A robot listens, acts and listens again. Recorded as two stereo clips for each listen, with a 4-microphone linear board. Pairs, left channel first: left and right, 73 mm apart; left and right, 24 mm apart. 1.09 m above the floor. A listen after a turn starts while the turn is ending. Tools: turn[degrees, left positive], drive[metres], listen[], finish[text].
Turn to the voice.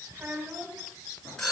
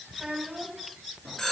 Thought: The child speaking: about 35° right or 145° right.
Action: turn[-35]
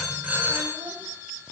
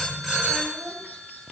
Action: listen[]
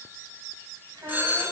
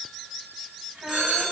Thought: So it is at 110° right.
Action: turn[-110]
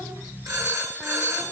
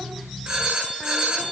Action: listen[]
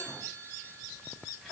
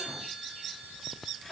Action: listen[]
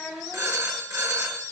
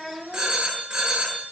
Action: finish[Facing the child speaking, over 4 m away.]